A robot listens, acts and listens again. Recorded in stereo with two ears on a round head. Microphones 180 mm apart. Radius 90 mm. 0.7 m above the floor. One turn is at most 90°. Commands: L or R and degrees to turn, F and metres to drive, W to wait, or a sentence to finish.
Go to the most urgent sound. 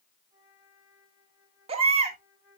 R30
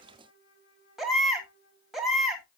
F1.0
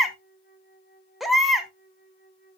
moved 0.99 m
F1.0
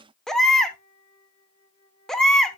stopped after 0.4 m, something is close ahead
I am next to the baby crying.